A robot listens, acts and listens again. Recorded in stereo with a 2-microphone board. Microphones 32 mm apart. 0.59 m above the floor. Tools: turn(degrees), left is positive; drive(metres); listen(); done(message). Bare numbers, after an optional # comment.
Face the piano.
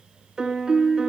# The piano: about 20° right or 160° right.
turn(-20)
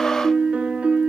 # So it is at 140° right.
turn(-140)
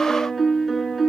done("Found it: a piano, straight ahead.")